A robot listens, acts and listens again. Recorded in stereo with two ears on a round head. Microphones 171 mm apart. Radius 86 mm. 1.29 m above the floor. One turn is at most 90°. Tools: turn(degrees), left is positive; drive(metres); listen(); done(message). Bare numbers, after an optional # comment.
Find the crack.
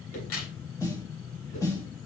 turn(90)
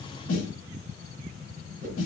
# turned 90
done("I heard a crack from this way, but can't make it out now.")